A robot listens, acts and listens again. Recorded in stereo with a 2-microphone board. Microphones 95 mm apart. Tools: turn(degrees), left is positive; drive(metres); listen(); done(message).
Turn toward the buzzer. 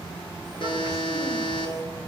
turn(degrees=70)
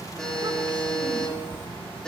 done("Facing the buzzer, over 4 m away.")